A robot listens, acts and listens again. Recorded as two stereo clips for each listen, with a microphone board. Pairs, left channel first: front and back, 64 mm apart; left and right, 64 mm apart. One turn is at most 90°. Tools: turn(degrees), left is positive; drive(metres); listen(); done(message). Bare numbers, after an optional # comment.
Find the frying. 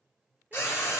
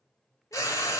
# The frying: 55° left.
turn(55)
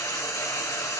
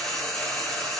# The frying is now 10° left.
turn(10)
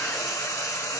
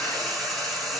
done("Facing the frying.")